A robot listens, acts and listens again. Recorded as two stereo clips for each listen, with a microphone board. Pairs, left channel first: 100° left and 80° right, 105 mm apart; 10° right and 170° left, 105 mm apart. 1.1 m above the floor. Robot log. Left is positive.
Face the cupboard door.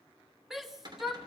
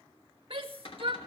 note: The cupboard door: 35° right.
cmd yaw -35
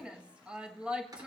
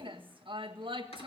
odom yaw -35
cmd idle
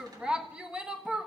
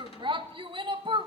cmd idle
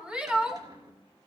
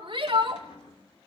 note: The cupboard door is now 25° right.
cmd yaw -25
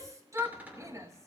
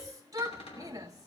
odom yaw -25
end: Found it: a cupboard door, straight ahead.